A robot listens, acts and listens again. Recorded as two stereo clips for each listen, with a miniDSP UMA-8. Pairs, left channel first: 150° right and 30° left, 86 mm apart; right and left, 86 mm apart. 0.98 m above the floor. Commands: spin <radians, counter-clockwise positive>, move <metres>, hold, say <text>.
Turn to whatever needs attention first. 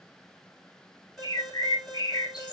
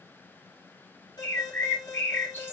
spin -1.05
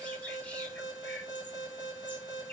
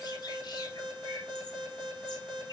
spin 0.17
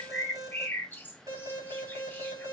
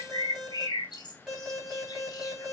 say Facing the alarm, 2 to 4 m away.